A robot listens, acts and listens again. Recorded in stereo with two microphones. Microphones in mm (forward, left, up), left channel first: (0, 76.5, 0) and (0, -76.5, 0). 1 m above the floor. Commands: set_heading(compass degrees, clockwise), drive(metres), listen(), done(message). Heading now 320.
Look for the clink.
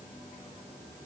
listen()
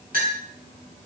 set_heading(30)
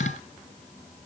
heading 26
listen()
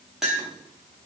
done("Facing the clink.")